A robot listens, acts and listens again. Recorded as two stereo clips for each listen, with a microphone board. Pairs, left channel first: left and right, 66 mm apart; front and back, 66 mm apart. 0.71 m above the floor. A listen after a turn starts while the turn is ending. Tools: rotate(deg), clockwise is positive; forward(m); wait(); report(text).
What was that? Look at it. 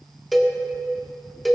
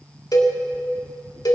report("Found it: a cowbell, straight ahead.")